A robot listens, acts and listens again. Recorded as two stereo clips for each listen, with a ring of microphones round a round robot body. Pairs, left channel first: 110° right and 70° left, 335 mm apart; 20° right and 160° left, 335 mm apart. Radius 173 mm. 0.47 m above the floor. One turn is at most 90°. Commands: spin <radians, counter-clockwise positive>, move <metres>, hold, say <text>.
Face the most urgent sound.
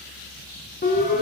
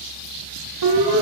spin 1.57
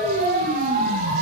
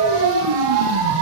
spin 1.57
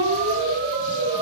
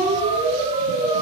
spin 1.48
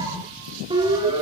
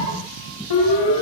spin -0.17
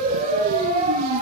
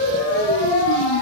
say Facing the siren.